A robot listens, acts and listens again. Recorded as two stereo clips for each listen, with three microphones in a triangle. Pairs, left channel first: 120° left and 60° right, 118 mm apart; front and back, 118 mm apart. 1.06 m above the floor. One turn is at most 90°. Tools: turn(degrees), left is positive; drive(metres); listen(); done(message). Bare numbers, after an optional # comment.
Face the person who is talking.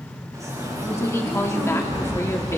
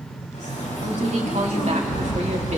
# The woman speaking: 175° right.
turn(-90)
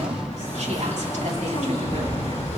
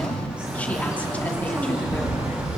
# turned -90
# Nothing new. It was at 85° right.
turn(-85)
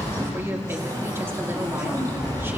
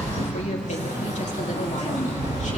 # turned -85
listen()
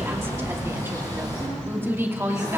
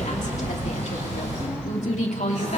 # The woman speaking is now 10° left.
turn(10)
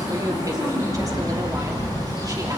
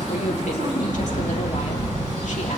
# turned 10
listen()
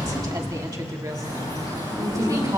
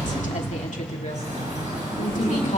done("Found it: a woman speaking, straight ahead.")